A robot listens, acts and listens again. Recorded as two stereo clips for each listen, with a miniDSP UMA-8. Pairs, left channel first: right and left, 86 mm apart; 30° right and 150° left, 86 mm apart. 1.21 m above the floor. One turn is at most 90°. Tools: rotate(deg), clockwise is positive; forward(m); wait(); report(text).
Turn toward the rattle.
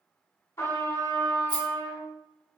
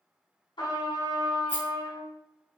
rotate(90)
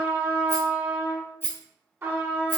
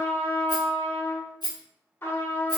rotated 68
rotate(30)
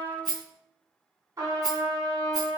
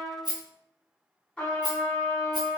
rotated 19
rotate(10)
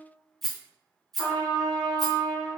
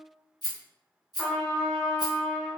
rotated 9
report("Found it: a rattle, straight ahead, 1 to 2 m away.")